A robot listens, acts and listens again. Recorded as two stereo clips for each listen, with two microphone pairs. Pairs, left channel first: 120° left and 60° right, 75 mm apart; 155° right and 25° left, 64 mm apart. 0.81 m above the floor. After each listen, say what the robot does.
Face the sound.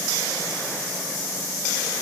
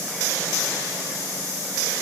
Keep listening.
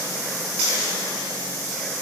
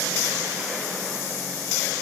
Keep listening.
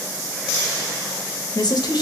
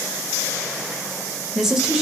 Turn 105° left.
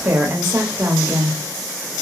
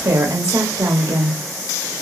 Facing the woman speaking, under 1 m away.